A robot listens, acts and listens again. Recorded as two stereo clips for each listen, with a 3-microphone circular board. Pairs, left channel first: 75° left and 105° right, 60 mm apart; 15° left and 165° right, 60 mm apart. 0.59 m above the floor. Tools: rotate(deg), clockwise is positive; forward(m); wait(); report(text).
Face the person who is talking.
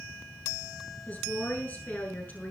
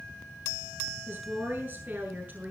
rotate(-135)
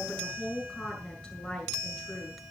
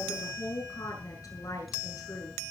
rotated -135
report("Found it: a woman speaking, straight ahead, over 4 m away.")